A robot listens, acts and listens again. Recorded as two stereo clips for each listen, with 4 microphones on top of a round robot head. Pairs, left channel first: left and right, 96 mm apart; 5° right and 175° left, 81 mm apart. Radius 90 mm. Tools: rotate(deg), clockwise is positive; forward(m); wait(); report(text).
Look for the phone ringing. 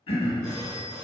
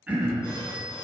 rotate(75)
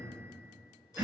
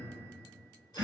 wait()
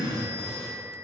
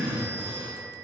rotate(-30)
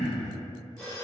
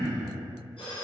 report("Facing the phone ringing, 1 to 2 m away.")